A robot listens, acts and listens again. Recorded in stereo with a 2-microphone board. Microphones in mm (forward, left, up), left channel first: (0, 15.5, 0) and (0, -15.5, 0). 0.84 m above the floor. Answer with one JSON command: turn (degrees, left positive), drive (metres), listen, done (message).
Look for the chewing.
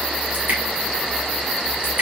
{"listen": true}
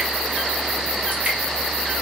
{"listen": true}
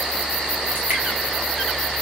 {"done": "I can't make out chewing, only dripping."}